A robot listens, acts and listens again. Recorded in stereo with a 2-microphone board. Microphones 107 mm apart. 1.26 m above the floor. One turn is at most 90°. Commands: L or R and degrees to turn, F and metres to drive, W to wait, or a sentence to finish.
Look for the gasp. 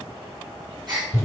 R45
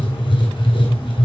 W
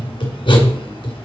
I heard a gasp, but can't make it out now. It was about straight ahead or 90° right.